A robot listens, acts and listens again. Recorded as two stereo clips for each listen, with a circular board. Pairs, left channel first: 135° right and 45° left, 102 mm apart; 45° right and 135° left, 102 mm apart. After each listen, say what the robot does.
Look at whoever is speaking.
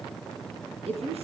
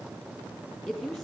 Turn 45° left.
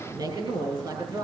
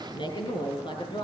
Found it: a woman speaking, straight ahead.